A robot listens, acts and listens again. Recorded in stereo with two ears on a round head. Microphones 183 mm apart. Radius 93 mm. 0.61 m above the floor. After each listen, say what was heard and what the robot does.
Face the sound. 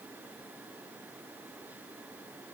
Keep listening.
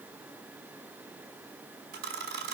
The camera shutter: about 50° right or 130° right. Turn 50° right.
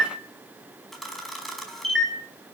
Facing the camera shutter.